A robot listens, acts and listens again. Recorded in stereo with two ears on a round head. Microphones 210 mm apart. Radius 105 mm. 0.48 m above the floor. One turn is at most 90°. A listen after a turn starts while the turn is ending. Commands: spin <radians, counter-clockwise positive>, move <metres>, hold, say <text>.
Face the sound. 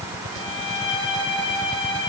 spin 0.44
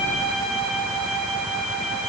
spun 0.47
say Facing the violin.